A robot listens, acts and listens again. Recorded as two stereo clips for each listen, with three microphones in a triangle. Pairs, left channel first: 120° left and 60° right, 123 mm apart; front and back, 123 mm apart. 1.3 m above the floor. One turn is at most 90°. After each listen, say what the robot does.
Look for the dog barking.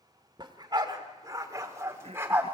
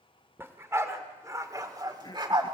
Turn 90° right.
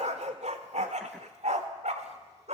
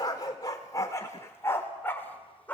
Turn 75° right.
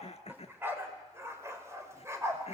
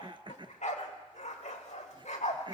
Facing the dog barking.